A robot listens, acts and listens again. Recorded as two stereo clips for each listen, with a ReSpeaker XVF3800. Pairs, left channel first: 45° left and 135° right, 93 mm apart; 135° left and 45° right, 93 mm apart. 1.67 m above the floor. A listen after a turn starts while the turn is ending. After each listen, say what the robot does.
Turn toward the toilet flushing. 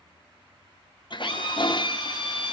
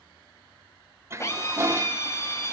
Turn 15° left.
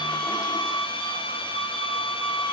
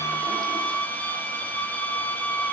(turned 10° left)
Keep listening.
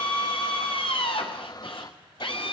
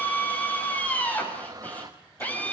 Found it: a toilet flushing, straight ahead, 1 to 2 m away.